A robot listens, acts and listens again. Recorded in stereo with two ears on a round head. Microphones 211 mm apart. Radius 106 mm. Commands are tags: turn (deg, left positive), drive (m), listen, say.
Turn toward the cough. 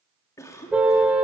<turn deg="30"/>
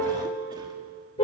<listen/>
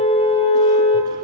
<listen/>
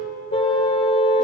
<say>I heard a cough, but can't make it out now. It was about 15° right or 135° left.</say>